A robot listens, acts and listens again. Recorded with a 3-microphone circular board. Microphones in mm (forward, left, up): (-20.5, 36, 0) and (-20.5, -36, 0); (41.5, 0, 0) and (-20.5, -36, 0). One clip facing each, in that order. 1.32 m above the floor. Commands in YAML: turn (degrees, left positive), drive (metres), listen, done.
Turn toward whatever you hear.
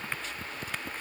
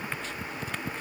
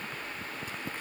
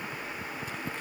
listen: true
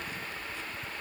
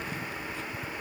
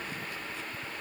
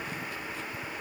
listen: true
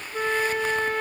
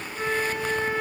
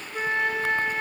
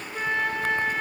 turn: 110
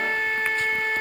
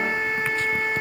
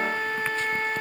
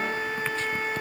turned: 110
turn: -10
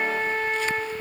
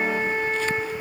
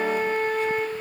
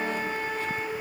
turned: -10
done: "Facing the flute, 2 to 4 m away."